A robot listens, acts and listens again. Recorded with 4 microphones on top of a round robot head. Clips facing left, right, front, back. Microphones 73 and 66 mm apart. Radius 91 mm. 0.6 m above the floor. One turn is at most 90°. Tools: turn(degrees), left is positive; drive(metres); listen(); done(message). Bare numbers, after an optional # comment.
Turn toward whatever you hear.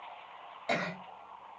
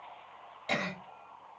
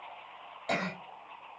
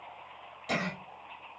# The cough: 30° left.
turn(30)
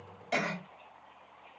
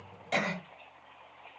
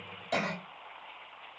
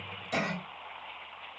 done("Facing the cough.")